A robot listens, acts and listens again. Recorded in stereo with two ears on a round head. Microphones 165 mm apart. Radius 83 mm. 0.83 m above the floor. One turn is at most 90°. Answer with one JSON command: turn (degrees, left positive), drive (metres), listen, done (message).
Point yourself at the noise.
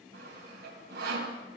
{"turn": -55}
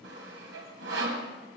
{"turn": -65}
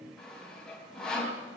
{"done": "Facing the sawing."}